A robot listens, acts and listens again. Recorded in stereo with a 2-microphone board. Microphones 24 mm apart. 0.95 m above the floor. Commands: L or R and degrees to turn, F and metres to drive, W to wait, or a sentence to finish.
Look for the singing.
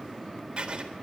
W
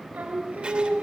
R90
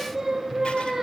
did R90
R15
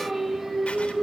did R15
R10
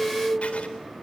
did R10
R15
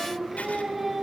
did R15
Facing the singing.